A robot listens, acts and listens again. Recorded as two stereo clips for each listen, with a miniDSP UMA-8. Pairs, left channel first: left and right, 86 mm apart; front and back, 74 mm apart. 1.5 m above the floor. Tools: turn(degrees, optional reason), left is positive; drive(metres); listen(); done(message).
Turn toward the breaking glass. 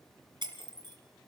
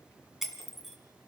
turn(degrees=-95, reason="The breaking glass: 95° right.")
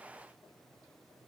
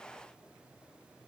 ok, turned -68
turn(degrees=-25, reason="Nothing new. It was at 25° right.")
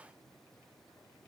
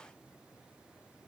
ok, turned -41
turn(degrees=15, reason="Nothing new. It was at 15° left.")
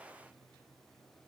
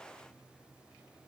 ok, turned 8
turn(degrees=10, reason="Nothing new. It was at 10° left.")
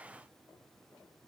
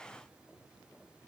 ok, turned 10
done("Facing where the breaking glass came from. I can't hear it now.")